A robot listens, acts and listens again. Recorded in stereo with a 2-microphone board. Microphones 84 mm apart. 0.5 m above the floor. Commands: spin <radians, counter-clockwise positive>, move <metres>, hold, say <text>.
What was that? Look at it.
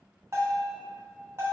spin -0.61
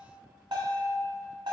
spin -1.92
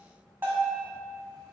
spin -0.44
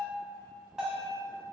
spin -0.17
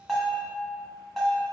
say Facing the bell, 1 to 2 m away.